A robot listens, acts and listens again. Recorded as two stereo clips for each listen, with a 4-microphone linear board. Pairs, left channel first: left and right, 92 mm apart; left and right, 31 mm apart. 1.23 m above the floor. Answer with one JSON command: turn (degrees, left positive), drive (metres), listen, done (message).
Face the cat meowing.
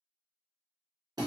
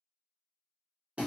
{"listen": true}
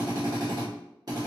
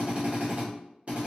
{"listen": true}
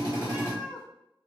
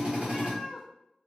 {"turn": -30}
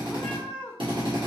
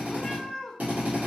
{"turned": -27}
{"turn": 15}
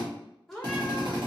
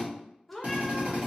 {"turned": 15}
{"done": "Found it: a cat meowing, straight ahead."}